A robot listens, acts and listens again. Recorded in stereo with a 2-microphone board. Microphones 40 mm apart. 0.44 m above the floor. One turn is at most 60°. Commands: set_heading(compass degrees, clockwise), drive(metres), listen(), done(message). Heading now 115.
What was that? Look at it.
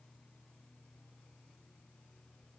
listen()
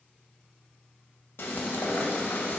set_heading(55)
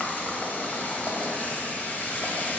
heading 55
set_heading(10)
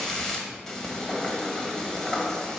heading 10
set_heading(355)
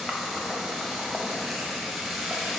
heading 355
done("Found it: frying, straight ahead, 1 to 2 m away.")